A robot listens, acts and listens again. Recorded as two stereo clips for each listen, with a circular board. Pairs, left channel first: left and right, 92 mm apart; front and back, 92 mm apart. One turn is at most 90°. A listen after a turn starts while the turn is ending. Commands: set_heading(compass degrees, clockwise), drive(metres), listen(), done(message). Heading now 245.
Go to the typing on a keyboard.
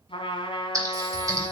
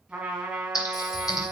set_heading(290)
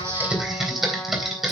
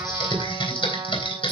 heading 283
drive(1.0)
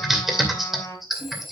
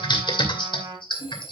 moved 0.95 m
drive(1.0)
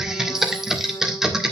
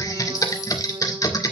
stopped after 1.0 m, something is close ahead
set_heading(293)
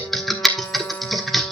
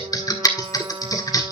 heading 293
done("I am next to the typing on a keyboard.")